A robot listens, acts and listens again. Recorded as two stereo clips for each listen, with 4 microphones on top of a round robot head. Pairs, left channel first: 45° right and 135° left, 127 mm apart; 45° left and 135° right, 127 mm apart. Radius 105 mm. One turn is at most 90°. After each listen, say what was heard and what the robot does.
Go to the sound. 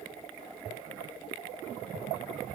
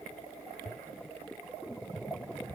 Keep listening.
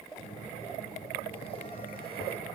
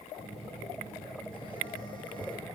Drive 1.0 m forward.
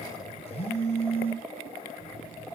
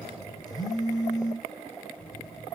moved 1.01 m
The phone buzzing is now 10° right. Turn 10° right.
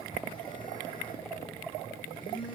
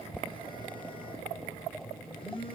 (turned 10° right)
Drive 1.0 m forward.
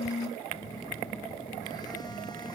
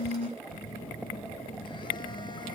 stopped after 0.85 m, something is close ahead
I am next to the phone buzzing.